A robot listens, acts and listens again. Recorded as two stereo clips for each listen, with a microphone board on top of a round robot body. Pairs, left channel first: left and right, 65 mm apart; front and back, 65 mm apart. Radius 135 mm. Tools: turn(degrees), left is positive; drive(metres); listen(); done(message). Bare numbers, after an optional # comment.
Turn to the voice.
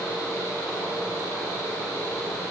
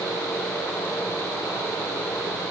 listen()
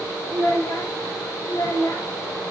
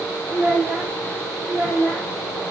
# The child speaking: 105° left.
turn(105)
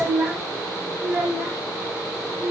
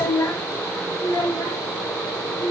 # The child speaking is now 20° right.
turn(-20)
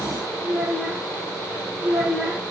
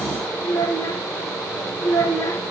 done("Found it: a child speaking, straight ahead, 2 to 4 m away.")